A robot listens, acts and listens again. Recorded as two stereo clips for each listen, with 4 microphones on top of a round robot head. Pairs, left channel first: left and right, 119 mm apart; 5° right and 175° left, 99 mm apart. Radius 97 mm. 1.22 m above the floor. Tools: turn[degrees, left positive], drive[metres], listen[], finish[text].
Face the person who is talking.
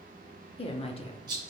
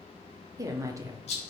Thought: The woman speaking: 120° left.
Action: turn[120]
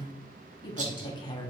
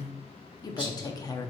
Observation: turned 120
Thought: The woman speaking is now 45° left.
Action: turn[45]
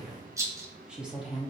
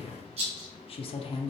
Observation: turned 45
Thought: The woman speaking is now 10° right.
Action: turn[-10]
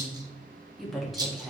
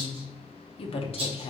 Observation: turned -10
Action: finish[Facing the woman speaking.]